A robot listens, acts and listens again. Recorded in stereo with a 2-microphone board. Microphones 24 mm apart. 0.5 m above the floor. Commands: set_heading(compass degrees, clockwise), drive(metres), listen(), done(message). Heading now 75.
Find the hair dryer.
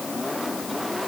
listen()
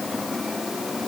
listen()
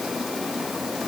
done("I can't make out a hair dryer.")